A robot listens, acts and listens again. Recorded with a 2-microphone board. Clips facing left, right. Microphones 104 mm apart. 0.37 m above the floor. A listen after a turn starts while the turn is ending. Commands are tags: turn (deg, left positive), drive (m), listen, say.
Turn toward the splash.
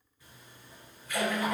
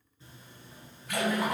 <turn deg="-70"/>
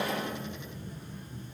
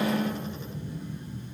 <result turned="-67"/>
<listen/>
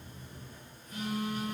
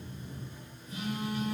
<say>I heard a splash, but can't make it out now. It was about straight ahead or 45° right.</say>